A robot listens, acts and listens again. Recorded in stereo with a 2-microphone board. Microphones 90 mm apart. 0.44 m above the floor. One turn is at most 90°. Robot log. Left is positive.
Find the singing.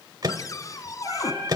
note: The singing: about 35° right or 145° right.
cmd yaw -35
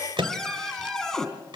end: Facing the singing, over 4 m away.